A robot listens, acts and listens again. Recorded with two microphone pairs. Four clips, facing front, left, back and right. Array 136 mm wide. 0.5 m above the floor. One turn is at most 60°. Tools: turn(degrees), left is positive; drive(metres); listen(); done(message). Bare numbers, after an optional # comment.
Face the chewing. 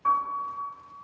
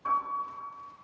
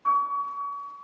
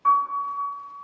listen()
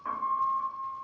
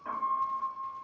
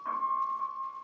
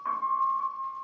listen()
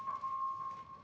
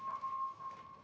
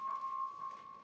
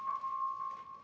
done("I can't make out chewing, only a piano.")